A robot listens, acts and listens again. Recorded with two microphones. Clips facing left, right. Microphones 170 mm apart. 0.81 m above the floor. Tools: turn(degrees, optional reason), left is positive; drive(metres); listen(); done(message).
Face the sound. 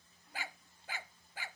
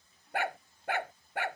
turn(degrees=-65, reason="The dog barking: about 65° right or 115° right.")
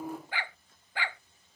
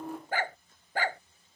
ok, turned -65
turn(degrees=-45, reason="So it is at 45° right.")
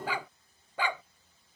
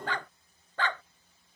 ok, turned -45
turn(degrees=10, reason="The dog barking is now 10° left.")
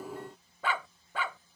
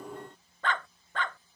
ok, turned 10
done("Facing the dog barking.")